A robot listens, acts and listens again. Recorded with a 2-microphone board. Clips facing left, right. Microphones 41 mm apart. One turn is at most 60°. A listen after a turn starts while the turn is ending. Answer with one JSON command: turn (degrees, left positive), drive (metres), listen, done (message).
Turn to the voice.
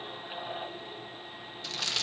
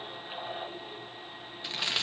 {"listen": true}
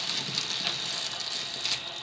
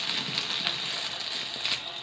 {"listen": true}
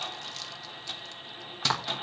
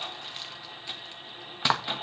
{"done": "I can't make out anyone speaking to turn to."}